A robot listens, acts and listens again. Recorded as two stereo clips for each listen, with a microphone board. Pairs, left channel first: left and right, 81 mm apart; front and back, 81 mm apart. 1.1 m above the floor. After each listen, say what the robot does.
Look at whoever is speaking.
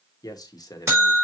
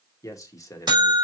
Turn 50° left.
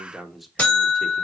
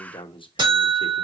Found it: a man speaking, straight ahead.